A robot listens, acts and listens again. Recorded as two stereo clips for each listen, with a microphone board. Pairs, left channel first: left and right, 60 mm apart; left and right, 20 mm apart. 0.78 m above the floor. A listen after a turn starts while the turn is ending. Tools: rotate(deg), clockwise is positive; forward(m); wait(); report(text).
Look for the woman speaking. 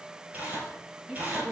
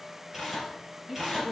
rotate(25)
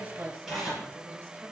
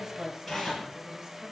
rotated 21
rotate(135)
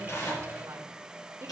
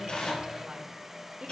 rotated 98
rotate(45)
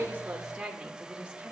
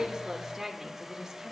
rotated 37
rotate(20)
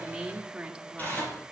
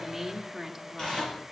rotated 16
rotate(15)
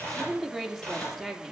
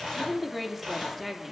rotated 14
report("Facing the woman speaking, 1 to 2 m away.")